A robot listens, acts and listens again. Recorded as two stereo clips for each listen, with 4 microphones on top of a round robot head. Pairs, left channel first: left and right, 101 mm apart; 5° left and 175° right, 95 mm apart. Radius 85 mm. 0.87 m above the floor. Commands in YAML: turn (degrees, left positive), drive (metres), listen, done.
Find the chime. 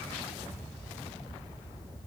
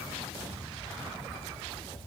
listen: true
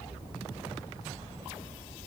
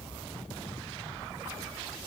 listen: true
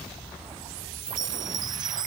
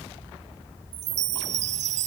turn: -155
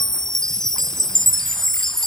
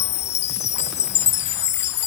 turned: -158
done: "Facing the chime."